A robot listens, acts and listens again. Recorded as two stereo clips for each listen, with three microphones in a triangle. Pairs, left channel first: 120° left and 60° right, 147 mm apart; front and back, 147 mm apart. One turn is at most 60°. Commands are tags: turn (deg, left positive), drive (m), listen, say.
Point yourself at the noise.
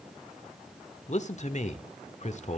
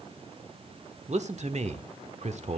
<turn deg="60"/>
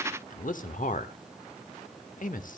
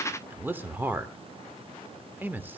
<turn deg="60"/>
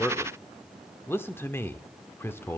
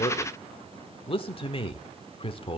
<turn deg="45"/>
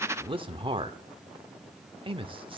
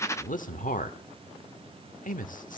<turn deg="-10"/>
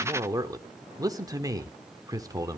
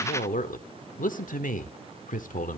<say>Facing the man speaking, 1 to 2 m away.</say>